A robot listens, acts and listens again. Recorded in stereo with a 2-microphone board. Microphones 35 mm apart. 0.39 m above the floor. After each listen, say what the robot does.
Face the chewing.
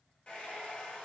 Keep listening.
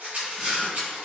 Turn 30° right.
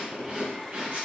Turn 140° right.
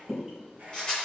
Turn 15° right.
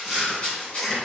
Found it: chewing, straight ahead.